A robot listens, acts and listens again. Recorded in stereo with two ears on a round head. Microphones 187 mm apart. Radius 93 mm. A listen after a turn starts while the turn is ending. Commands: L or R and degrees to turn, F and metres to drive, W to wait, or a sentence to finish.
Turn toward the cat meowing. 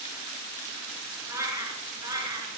R20
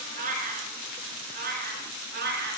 R125
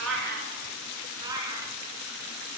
R15
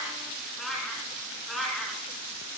Found it: a cat meowing, straight ahead, 2 to 4 m away.